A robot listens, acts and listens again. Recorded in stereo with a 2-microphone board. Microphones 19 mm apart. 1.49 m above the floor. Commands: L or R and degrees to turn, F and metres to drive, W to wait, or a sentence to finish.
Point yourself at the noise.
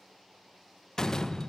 L40
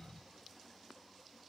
W
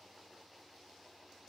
I heard a door slam, but can't make it out now. It was about straight ahead or 100° left.